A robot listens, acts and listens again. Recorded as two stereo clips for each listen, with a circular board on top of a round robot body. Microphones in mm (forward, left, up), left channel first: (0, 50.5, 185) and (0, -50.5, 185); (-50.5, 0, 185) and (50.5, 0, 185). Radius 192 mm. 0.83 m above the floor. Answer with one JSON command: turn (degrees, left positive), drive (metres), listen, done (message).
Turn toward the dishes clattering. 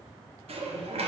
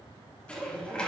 {"turn": -100}
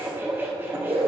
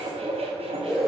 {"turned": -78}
{"turn": -20}
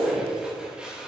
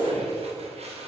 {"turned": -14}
{"turn": -10}
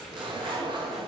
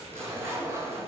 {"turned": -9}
{"listen": true}
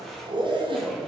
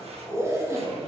{"listen": true}
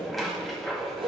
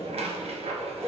{"done": "Found it: dishes clattering, straight ahead, 1 to 2 m away."}